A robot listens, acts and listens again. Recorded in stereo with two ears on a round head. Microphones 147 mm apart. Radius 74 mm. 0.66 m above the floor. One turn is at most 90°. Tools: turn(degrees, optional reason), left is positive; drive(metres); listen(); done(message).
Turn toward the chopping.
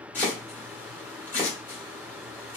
turn(degrees=30)
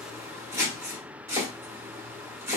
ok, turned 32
turn(degrees=-20, reason="So it is at 20° right.")
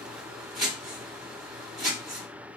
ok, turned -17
done("Found it: chopping, straight ahead, 1 to 2 m away.")